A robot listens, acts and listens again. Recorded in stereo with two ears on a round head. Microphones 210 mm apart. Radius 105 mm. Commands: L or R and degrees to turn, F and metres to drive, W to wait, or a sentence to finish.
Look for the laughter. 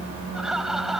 L30
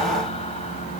W
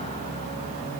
W
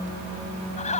L150
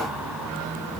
W
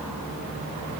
W
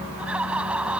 Found it: laughter, straight ahead.